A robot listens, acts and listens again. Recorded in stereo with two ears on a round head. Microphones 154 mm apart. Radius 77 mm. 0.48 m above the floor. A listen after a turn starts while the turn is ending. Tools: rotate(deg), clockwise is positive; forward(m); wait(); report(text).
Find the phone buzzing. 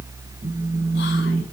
rotate(50)
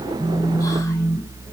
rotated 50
report("Found it: a phone buzzing, straight ahead, over 4 m away.")